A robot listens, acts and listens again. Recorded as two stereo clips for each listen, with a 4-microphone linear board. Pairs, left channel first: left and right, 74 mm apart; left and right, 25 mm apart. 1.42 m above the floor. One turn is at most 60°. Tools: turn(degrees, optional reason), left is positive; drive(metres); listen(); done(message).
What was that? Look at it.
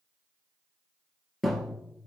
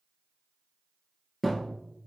turn(degrees=30)
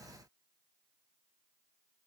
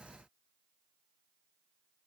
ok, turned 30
listen()
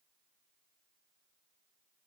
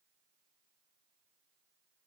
done("I heard a thud, but can't make it out now. It was about 30° right or 150° left.")